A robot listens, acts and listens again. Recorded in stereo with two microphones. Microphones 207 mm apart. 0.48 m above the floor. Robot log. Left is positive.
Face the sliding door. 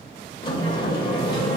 note: The sliding door: about 20° left or 160° left.
cmd yaw +20
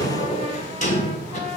note: So it is at 135° left.
cmd yaw +135
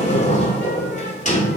note: The sliding door is now 45° left.
cmd yaw +45
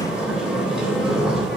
end: Facing the sliding door, 2 to 4 m away.